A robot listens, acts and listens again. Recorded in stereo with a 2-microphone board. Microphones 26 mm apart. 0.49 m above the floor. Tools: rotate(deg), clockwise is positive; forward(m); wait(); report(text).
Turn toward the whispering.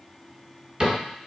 wait()
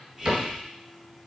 rotate(20)
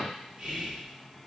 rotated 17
rotate(145)
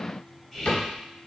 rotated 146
rotate(-10)
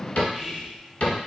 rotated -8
report("Facing the whispering.")